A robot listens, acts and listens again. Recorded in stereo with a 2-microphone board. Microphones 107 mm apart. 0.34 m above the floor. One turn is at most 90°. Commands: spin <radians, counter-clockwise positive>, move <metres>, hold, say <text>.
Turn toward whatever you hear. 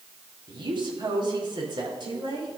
spin -0.79
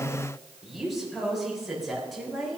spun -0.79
say Facing the woman speaking, over 4 m away.